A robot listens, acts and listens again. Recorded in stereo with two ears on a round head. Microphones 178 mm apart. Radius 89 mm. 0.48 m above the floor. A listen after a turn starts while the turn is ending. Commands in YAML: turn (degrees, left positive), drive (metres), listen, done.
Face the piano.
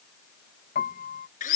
turn: 40
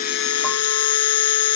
listen: true
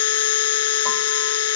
listen: true
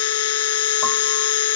done: "I heard a piano, but can't make it out now. It was about straight ahead or 100° left."